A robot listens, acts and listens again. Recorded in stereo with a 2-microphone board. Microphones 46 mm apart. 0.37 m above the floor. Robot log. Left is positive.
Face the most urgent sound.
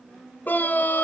note: The scream: about 40° left or 140° left.
cmd yaw +40
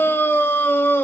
note: So it is at 90° left.
cmd yaw +90
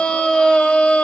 note: The scream is now 25° left.
cmd yaw +25
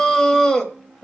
note: The scream is now 15° left.
cmd yaw +15
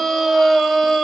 end: Facing the scream.